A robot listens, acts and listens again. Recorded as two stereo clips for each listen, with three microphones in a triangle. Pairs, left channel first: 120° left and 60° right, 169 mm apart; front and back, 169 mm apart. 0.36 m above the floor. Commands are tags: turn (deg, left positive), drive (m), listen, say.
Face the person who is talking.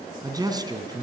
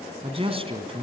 <turn deg="-125"/>
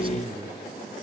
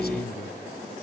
<say>Found it: a man speaking, straight ahead.</say>